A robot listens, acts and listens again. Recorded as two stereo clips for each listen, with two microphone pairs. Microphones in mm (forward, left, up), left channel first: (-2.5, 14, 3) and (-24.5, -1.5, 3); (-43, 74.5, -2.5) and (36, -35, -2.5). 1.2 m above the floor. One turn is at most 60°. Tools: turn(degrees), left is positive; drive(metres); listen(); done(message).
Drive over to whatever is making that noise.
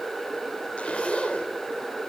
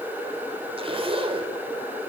turn(degrees=-10)
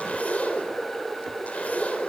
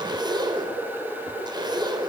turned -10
drive(metres=1.0)
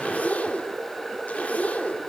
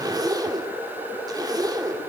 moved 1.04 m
drive(metres=1.0)
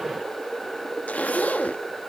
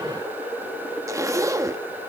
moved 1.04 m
turn(degrees=15)
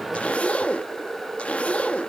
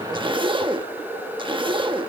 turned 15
drive(metres=1.0)
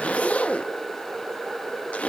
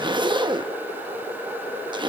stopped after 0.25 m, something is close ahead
done("I am next to the zipper.")